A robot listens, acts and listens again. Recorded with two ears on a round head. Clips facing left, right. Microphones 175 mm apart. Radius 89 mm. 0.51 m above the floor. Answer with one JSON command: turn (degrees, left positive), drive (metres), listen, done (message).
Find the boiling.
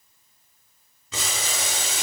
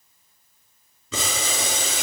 {"turn": -65}
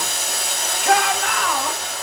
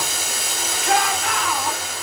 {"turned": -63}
{"done": "Facing the boiling."}